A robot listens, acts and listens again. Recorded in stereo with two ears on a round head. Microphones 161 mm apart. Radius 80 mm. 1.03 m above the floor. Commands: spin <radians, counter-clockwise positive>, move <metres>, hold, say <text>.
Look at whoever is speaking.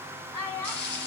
spin 0.52
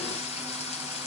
hold
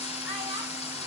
hold
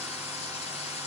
say I heard a child speaking, but can't make it out now. It was about 15° right or 135° left.